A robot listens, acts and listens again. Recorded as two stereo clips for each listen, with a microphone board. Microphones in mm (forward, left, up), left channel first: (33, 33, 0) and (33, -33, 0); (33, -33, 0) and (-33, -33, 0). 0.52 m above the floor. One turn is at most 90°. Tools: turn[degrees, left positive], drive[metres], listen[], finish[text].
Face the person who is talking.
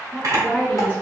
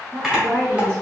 Thought: The woman speaking: 150° left.
Action: turn[90]
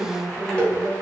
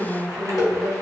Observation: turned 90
Thought: The woman speaking is now 60° left.
Action: turn[60]
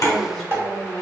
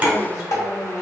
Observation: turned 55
Action: finish[Facing the woman speaking.]